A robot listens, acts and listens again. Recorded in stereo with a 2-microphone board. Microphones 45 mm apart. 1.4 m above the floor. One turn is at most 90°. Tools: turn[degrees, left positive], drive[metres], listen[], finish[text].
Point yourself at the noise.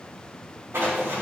Action: turn[-90]
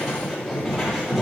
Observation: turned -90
Thought: So it is at 15° right.
Action: turn[-15]
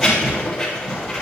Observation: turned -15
Action: finish[Facing the writing, 2 to 4 m away.]